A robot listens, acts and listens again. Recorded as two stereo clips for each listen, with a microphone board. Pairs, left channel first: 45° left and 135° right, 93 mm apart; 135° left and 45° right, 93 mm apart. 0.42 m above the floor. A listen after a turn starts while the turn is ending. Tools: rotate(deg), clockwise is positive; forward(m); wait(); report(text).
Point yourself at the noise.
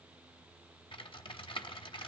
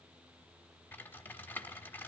rotate(-65)
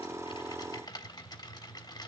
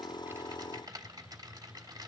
report("Found it: typing on a keyboard, straight ahead.")